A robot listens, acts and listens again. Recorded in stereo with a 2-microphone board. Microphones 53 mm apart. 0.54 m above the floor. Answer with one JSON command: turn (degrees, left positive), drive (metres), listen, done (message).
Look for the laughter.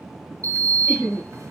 {"turn": -35}
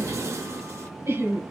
{"turn": -110}
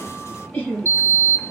{"turn": 30}
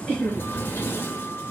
{"turn": 10}
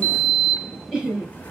{"done": "Found it: laughter, straight ahead."}